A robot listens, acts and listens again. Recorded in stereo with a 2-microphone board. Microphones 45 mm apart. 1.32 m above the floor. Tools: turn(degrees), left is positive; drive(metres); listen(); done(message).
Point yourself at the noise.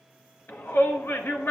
turn(degrees=55)
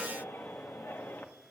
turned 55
turn(degrees=70)
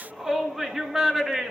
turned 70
turn(degrees=-10)
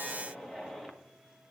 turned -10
listen()
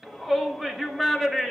done("Found it: a shout, straight ahead, 1 to 2 m away.")